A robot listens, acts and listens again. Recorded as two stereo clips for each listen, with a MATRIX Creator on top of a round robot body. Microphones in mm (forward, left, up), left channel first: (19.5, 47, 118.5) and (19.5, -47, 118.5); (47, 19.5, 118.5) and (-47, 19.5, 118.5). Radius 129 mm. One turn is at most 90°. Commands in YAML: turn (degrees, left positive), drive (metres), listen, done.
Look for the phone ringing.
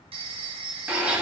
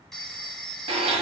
turn: -85
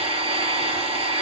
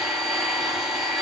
listen: true
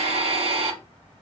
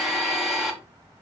listen: true
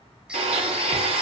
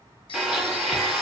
done: "Facing where the phone ringing came from. I can't hear it now."